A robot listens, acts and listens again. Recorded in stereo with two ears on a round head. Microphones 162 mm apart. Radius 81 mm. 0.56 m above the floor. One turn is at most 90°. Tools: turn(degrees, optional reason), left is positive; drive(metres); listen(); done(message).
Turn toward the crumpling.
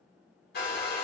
listen()
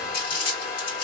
turn(degrees=50, reason="The crumpling: about 50° left or 130° left.")
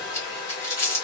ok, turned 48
turn(degrees=20, reason="So it is at 20° left.")
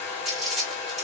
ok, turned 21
done("Found it: crumpling, straight ahead.")